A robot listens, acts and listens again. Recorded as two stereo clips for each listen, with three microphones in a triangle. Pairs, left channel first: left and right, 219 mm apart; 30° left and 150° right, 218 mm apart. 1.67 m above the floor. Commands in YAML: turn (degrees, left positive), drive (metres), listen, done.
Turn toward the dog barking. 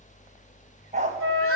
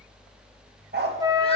turn: -135
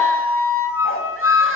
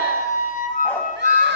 listen: true
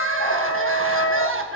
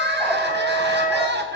listen: true
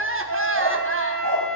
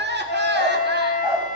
turn: 130
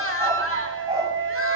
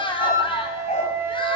turn: -20
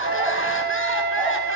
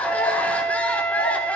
listen: true
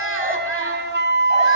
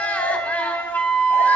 listen: true
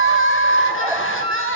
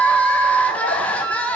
done: "I heard a dog barking from this way, but can't make it out now."